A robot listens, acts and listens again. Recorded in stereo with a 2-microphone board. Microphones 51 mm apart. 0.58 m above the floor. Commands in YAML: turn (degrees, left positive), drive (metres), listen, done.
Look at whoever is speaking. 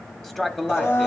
turn: 30
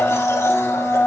listen: true
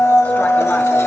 listen: true
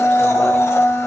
done: "I heard a man speaking, but can't make it out now. It was about 25° right or 145° left."